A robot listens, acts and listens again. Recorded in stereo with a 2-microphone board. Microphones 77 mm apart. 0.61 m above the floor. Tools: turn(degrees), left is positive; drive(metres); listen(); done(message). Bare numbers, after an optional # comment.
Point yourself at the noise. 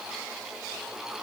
listen()
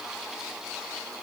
listen()
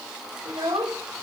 # The child speaking: about 60° right or 120° right.
turn(-60)
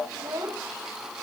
# So it is at 60° right.
turn(-60)
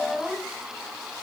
done("Facing the child speaking.")